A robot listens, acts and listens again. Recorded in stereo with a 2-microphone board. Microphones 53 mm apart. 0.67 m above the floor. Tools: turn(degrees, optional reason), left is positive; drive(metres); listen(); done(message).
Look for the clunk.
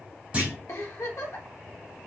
turn(degrees=-25, reason="The clunk: about 25° right or 155° right.")
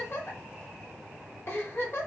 listen()
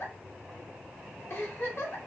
done("I heard a clunk, but can't make it out now. It was about straight ahead or 130° right.")